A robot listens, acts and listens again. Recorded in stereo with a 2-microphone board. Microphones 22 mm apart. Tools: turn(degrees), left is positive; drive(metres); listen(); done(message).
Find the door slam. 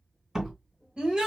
turn(degrees=-25)
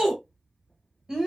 listen()
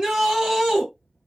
done("I heard a door slam, but can't make it out now. It was about straight ahead or 130° right.")